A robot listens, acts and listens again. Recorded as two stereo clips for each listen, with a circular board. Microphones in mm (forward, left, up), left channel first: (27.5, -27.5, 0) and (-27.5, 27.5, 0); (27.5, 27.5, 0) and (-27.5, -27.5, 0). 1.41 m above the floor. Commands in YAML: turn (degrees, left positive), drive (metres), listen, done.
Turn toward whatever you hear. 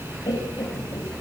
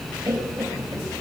turn: -70
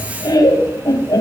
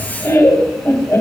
done: "Found it: laughter, straight ahead."